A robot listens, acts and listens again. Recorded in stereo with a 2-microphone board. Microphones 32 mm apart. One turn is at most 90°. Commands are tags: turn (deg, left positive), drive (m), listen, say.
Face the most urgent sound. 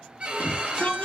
<turn deg="55"/>
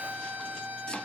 <listen/>
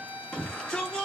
<turn deg="15"/>
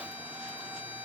<listen/>
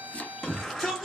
<say>Found it: a shout, straight ahead.</say>